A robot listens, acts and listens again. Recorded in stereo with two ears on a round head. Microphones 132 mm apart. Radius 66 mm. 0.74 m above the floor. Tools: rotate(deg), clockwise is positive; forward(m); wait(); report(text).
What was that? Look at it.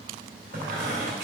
rotate(60)
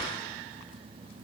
wait()
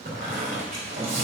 rotate(60)
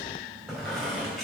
report("Facing the squeak.")